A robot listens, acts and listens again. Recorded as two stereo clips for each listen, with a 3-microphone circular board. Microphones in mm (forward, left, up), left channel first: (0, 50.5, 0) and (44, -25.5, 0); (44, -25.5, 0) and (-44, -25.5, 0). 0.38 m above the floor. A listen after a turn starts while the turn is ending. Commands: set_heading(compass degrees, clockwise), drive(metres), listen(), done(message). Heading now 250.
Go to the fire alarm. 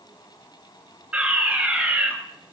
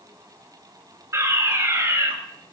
set_heading(20)
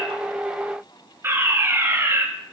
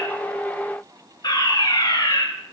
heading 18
drive(1.0)
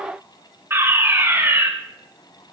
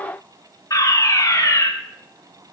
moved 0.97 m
set_heading(33)
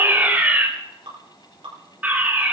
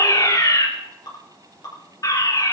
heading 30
drive(1.0)
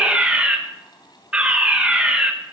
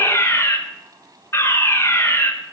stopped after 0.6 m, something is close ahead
done("Arrived at the fire alarm, straight ahead.")